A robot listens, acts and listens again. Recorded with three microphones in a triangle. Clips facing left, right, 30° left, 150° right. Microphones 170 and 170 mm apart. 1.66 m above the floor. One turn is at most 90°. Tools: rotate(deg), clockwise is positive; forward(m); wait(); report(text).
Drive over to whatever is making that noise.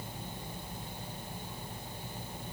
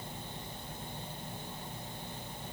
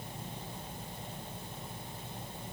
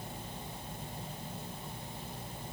wait()
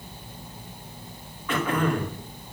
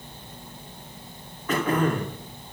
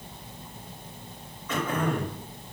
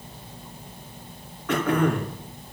rotate(90)
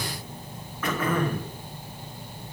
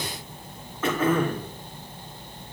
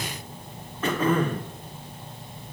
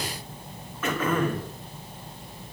rotate(25)
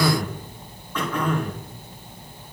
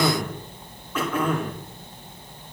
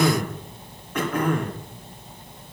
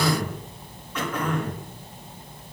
forward(1.0)
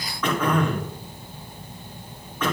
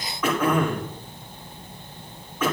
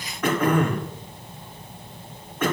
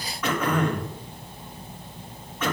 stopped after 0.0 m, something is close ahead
report("Blocked. The throat clearing is further on, straight ahead.")